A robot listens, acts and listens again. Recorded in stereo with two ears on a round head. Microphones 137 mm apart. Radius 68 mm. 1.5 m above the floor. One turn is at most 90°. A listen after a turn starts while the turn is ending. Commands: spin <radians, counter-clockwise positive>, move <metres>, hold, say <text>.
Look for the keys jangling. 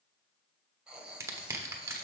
hold
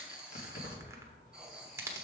spin 0.96
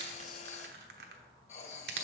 hold
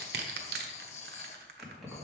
say Found it: keys jangling, straight ahead.